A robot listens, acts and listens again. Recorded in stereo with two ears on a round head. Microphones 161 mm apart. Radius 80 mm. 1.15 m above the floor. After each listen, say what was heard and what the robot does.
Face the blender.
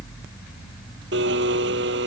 The blender: about 70° right or 110° right. Turn 70° right.
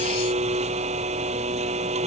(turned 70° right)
So it is at 40° right. Turn 40° right.
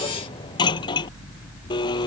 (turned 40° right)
The blender is now 25° left. Turn 25° left.
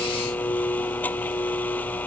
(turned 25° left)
Keep listening.
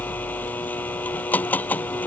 The blender is now 10° left. Turn 10° left.
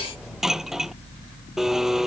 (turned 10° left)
Facing the blender.